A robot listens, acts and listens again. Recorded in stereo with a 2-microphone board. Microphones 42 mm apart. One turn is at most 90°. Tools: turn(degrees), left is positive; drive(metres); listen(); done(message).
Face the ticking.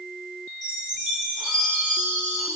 listen()
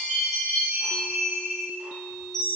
listen()
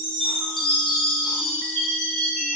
done("I can't make out ticking to turn to.")